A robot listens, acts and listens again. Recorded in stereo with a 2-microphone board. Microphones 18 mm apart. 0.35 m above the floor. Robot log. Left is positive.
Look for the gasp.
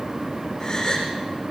note: The gasp: about 35° left or 145° left.
cmd yaw +35
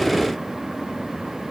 cmd idle
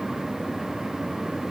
end: I heard a gasp, but can't make it out now. It was about straight ahead or 110° left.